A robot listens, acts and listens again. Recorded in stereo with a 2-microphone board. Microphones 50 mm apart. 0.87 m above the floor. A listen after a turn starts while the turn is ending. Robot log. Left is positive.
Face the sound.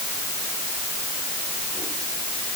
cmd idle
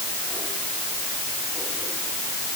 cmd idle
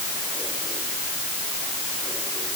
end: I can't make out anything to turn to.